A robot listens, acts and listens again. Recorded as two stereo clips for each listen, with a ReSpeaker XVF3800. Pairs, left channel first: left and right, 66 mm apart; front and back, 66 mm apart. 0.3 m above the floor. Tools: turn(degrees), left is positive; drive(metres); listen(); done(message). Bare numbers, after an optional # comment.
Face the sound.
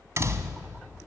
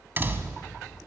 # The door slam: 125° right.
turn(-125)
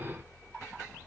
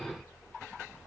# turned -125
done("I heard a door slam from this way, but can't make it out now.")